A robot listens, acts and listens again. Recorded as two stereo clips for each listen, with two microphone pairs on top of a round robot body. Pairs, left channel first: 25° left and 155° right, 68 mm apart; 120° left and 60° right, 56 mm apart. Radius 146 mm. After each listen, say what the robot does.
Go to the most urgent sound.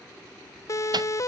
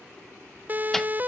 Drive 1.0 m forward.
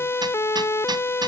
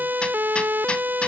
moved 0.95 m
Turn 15° right.
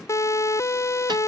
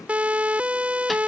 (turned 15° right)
Drive 1.0 m forward.
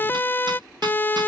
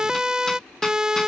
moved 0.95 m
Turn 10° left.
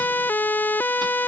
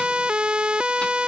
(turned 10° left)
Drive 1.0 m forward.
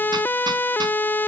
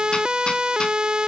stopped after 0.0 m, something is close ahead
Arrived at the siren, straight ahead.